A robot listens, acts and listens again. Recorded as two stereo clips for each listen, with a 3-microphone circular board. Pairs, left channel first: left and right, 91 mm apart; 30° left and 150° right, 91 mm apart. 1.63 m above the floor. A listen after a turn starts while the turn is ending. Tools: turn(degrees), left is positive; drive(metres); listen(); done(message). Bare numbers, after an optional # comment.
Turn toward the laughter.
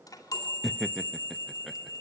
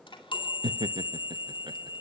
# The laughter: straight behind.
turn(180)
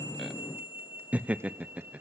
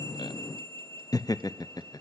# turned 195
# The laughter is now 15° right.
turn(-15)
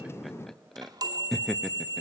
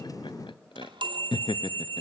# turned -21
done("Facing the laughter.")